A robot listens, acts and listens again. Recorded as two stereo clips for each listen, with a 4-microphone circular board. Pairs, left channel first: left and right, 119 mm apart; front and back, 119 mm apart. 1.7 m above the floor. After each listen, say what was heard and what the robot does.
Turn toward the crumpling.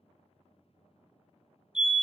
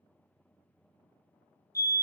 Keep listening.
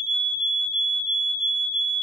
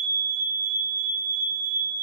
Keep listening.
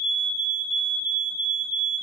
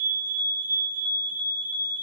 I can't make out crumpling, only a fire alarm.